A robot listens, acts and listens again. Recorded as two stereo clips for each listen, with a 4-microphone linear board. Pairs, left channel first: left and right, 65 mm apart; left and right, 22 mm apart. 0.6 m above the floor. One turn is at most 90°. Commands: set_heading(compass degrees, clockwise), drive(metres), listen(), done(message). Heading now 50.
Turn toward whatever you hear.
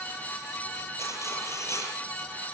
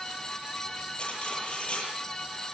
set_heading(0)
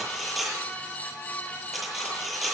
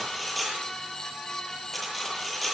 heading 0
done("Facing the cutlery clinking.")